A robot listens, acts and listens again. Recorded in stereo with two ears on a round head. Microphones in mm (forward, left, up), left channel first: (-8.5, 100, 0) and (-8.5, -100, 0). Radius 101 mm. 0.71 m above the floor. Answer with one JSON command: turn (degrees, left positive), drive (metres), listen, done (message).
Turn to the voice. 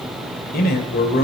{"turn": 40}
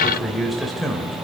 {"done": "Facing the man speaking."}